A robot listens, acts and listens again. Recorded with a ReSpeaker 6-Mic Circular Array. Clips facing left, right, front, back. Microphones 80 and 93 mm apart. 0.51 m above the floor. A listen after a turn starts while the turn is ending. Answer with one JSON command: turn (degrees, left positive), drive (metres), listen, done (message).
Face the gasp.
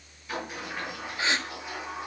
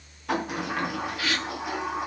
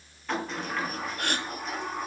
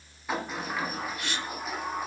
{"turn": 30}
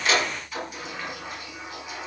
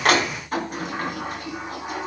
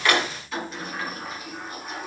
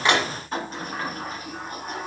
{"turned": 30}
{"done": "I heard a gasp from this way, but can't make it out now."}